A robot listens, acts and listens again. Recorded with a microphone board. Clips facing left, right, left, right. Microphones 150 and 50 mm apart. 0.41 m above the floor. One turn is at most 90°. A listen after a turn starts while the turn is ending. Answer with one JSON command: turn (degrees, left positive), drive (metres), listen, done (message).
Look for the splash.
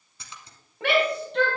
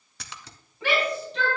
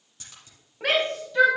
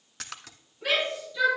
{"turn": -90}
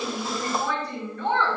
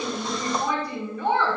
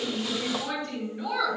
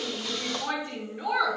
{"done": "Facing where the splash came from. I can't hear it now."}